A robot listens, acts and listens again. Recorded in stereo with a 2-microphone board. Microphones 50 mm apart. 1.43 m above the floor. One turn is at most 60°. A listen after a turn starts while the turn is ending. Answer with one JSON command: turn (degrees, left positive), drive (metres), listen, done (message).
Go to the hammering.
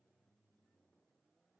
{"listen": true}
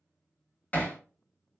{"turn": 30}
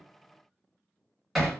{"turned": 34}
{"drive": 1.0}
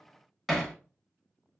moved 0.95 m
{"drive": 1.0}
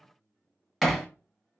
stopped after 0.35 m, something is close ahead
{"done": "I am next to the hammering."}